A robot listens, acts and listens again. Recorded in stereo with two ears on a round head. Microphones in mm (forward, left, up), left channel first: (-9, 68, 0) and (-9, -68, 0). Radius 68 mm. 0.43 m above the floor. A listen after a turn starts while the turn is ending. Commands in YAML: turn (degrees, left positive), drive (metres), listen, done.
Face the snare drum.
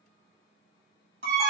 listen: true
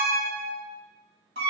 listen: true
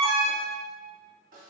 turn: -55
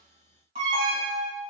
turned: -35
listen: true
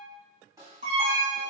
turn: -25
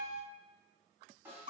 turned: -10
turn: -15
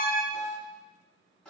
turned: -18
done: "Found it: a snare drum, straight ahead, 1 to 2 m away."